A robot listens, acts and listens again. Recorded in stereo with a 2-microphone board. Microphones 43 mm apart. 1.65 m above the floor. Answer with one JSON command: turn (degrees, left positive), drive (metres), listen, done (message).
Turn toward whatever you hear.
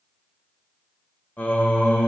{"turn": 30}
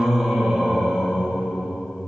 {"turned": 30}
{"turn": -35}
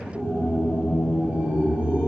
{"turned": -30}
{"turn": -25}
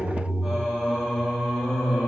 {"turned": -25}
{"done": "Found it: singing, straight ahead, 2 to 4 m away."}